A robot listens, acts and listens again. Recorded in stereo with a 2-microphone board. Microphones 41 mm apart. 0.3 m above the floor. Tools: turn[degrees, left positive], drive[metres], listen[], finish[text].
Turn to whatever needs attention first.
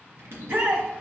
Thought: The shout: about 55° right or 125° right.
Action: turn[-55]
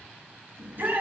Thought: So it is at 55° right.
Action: turn[-55]
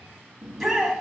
Action: finish[Found it: a shout, straight ahead, 1 to 2 m away.]